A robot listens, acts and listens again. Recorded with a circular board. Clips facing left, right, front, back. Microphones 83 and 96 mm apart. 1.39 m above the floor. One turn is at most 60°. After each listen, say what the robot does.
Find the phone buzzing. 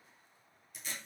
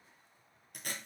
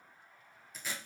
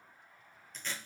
Keep listening.
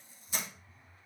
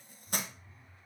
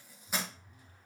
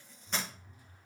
Turn 60° right.
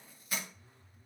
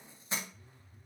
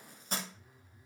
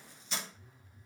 Turn 60° right.
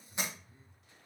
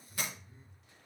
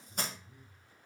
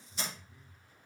Turn 25° right.
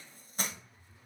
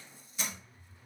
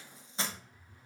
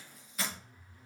Turn 10° left.
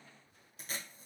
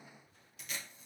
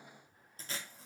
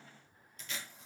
Keep listening.
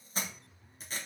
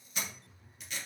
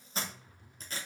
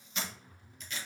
Found it: a phone buzzing, straight ahead.